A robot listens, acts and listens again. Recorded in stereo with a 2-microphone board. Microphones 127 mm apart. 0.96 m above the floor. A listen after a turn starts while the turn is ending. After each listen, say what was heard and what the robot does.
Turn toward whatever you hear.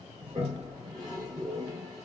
The toilet flushing: about 30° right or 150° right. Turn 30° right.
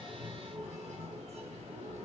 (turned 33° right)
So it is at 120° right. Turn 120° right.
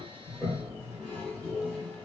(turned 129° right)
The toilet flushing is now 10° left. Turn 10° left.
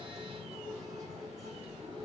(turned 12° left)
Found it: a toilet flushing, straight ahead, 1 to 2 m away.